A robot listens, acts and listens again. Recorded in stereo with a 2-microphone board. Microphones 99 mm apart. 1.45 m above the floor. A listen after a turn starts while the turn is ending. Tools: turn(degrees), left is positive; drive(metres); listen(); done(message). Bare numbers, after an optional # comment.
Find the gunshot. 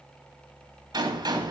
# The gunshot: about 50° right or 130° right.
turn(-50)
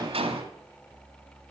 # So it is at 80° right.
turn(-80)
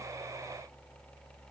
done("Facing where the gunshot came from. I can't hear it now.")